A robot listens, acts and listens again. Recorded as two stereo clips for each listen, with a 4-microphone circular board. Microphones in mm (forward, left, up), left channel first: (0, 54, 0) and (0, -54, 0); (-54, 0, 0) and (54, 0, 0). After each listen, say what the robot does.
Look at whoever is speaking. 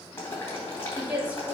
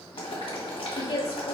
Turn 165° right.
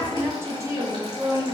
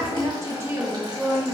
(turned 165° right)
Turn 75° right.
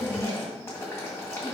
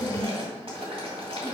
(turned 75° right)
Turn 40° right.
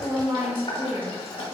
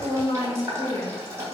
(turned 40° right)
Turn 25° right.
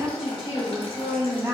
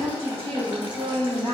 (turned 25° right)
Turn 15° right.
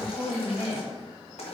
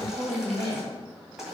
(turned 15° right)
Found it: a woman speaking, straight ahead, 2 to 4 m away.